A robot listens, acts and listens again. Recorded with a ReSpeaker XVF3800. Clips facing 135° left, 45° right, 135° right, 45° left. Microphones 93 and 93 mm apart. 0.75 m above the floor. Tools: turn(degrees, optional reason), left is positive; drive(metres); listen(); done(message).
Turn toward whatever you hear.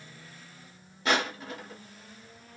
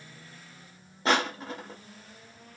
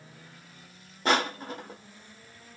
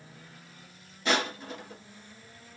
turn(degrees=-95, reason="The crushing: 95° right.")
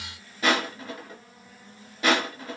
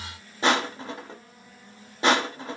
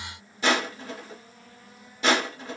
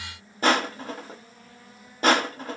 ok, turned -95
turn(degrees=10, reason="The crushing is now 10° left.")
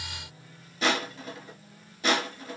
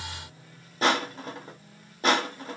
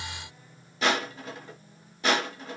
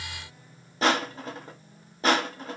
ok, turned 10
done("Found it: crushing, straight ahead.")